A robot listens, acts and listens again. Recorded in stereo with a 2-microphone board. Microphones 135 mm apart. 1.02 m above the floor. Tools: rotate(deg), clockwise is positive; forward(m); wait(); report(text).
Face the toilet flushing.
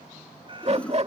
rotate(-30)
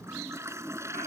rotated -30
rotate(20)
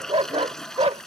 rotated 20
report("Found it: a toilet flushing, straight ahead.")